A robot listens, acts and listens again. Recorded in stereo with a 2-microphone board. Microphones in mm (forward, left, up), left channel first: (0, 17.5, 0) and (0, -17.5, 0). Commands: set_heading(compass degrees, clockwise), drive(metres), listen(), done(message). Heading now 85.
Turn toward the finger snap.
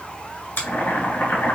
set_heading(355)
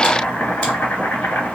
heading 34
set_heading(354)
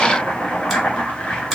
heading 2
listen()
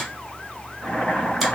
done("I heard a finger snap from this way, but can't make it out now.")